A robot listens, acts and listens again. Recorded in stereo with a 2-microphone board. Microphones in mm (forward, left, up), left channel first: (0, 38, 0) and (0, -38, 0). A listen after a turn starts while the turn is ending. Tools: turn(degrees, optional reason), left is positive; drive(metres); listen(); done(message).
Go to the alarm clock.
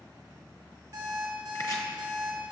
turn(degrees=-45, reason="The alarm clock: about 45° right or 135° right.")
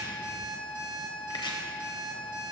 turn(degrees=-90, reason="So it is at 90° right.")
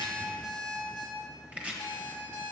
turn(degrees=15, reason="The alarm clock is now 15° left.")
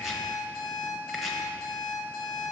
drive(metres=1.0)
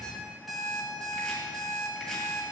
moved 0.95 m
drive(metres=1.0)
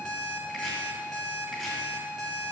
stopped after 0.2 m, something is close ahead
turn(degrees=10, reason="The alarm clock is now 10° left.")
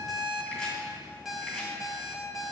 done("I am next to the alarm clock.")